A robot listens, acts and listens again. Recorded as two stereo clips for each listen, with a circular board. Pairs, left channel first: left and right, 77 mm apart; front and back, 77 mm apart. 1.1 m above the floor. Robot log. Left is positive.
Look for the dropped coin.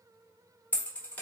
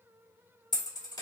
note: The dropped coin: 20° left.
cmd yaw +20
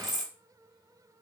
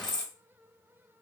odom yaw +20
end: Found it: a dropped coin, straight ahead, 1 to 2 m away.